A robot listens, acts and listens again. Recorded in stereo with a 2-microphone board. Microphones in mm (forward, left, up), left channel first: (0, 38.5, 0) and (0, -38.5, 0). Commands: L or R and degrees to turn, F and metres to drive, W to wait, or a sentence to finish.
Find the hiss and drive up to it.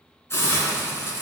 L35
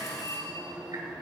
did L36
W
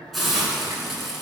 F1.0
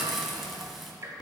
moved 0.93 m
F1.0
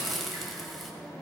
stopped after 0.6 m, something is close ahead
I am next to the hiss.